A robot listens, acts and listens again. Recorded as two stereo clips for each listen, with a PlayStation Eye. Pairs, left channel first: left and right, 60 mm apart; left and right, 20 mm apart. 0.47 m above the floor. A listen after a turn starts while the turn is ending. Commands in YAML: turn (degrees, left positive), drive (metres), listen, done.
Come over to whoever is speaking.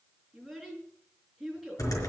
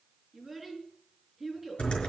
turn: 30
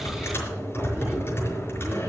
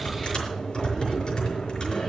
listen: true
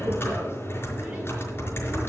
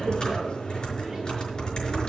listen: true
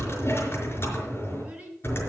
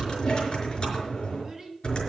turn: -20
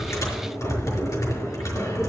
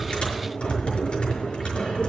listen: true
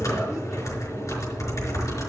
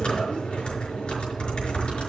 listen: true
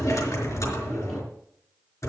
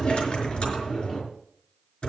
done: "I heard a child speaking from this way, but can't make it out now. I did not reach it."